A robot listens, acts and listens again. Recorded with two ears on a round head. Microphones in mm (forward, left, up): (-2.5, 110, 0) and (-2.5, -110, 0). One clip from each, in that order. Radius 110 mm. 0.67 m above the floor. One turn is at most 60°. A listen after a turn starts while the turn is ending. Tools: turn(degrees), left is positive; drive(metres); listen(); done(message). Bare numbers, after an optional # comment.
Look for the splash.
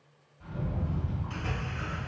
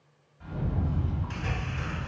# The splash: about 50° right or 130° right.
turn(-50)
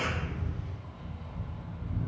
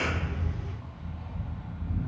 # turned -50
listen()
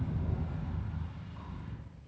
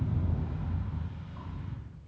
done("I heard a splash, but can't make it out now. It was about straight ahead or 80° right.")